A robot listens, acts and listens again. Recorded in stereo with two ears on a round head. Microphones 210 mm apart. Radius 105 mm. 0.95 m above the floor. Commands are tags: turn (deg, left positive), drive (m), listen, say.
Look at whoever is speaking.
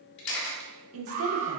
<turn deg="-60"/>
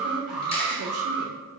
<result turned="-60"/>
<turn deg="-60"/>
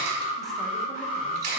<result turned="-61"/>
<listen/>
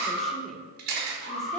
<say>Found it: a woman speaking, straight ahead, 1 to 2 m away.</say>